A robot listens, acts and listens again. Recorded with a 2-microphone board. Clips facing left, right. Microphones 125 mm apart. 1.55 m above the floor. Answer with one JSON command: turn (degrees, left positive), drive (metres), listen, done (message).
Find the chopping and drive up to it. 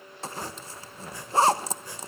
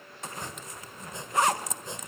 {"turn": -20}
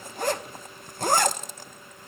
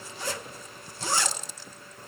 {"listen": true}
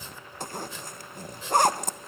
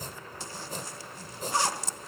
{"turn": -135}
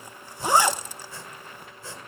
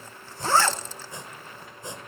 {"turn": -20}
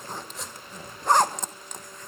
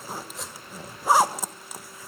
{"drive": 1.0}
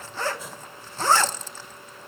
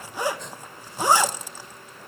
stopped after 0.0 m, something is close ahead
{"done": "Blocked. The chopping is further on, straight ahead."}